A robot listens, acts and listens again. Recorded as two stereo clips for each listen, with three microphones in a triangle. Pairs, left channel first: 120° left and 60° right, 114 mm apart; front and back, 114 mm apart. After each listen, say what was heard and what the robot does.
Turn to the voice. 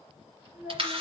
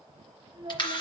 The child speaking: 135° right. Turn 135° right.
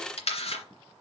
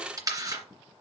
Keep listening.
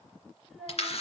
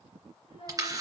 The child speaking is now 30° left. Turn 30° left.
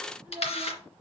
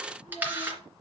The child speaking is now 15° left. Turn 15° left.
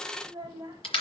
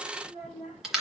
Found it: a child speaking, straight ahead, over 4 m away.